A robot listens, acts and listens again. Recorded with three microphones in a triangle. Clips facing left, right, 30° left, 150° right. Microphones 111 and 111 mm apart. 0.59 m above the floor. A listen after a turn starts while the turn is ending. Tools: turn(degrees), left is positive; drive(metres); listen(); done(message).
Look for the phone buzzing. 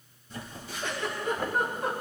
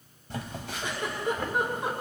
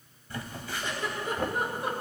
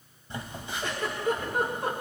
turn(degrees=-85)
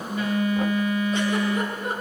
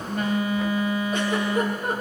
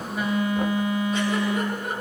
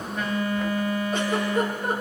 turn(degrees=-40)
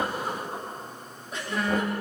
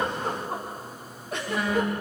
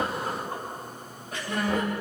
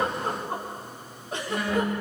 turn(degrees=-10)
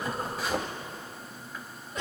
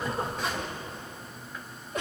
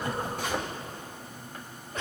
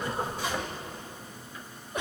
done("Found it: a phone buzzing, straight ahead.")